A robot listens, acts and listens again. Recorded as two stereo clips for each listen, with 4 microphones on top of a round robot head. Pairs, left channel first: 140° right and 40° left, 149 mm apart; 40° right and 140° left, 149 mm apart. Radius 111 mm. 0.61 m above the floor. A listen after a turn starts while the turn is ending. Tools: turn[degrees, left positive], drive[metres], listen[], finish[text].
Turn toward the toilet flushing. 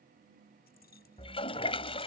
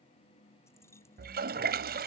Thought: The toilet flushing: 165° left.
Action: turn[165]
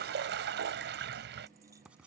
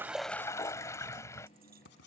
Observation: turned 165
Thought: The toilet flushing is now 30° left.
Action: turn[30]
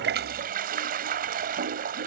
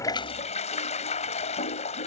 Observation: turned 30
Thought: The toilet flushing is now 10° left.
Action: turn[10]
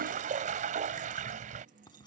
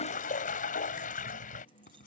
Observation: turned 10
Action: finish[Found it: a toilet flushing, straight ahead.]